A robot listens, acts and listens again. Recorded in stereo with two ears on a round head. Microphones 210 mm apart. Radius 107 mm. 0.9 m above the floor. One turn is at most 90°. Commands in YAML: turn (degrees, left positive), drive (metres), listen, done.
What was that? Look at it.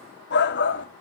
turn: 50
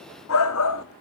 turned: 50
turn: 75
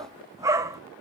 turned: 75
turn: -15
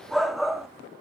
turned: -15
done: "Facing the shout, 1 to 2 m away."